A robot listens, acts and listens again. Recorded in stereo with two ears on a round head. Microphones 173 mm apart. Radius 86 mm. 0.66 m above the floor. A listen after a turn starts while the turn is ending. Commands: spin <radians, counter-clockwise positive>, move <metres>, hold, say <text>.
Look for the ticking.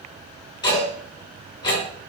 spin 0.44
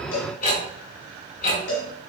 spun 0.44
spin 2.27
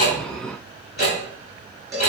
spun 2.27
spin 0.79
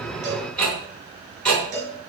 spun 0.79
say Found it: ticking, straight ahead, 2 to 4 m away.